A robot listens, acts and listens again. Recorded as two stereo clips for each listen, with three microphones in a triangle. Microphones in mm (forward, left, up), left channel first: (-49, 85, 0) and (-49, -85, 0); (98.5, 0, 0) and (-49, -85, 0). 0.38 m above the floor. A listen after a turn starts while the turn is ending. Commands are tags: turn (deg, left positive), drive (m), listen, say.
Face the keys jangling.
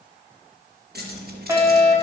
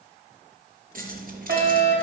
<turn deg="-115"/>
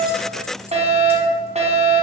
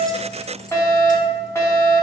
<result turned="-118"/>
<listen/>
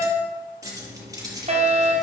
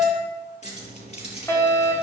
<turn deg="-20"/>
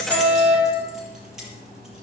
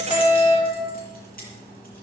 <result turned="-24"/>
<say>Facing the keys jangling.</say>